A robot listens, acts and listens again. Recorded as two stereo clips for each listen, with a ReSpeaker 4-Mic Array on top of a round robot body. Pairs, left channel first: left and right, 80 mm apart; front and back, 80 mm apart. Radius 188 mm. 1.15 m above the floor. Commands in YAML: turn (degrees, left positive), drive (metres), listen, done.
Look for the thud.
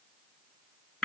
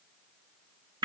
listen: true
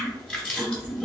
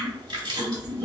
listen: true
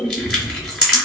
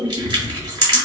done: "I can't make out a thud to turn to."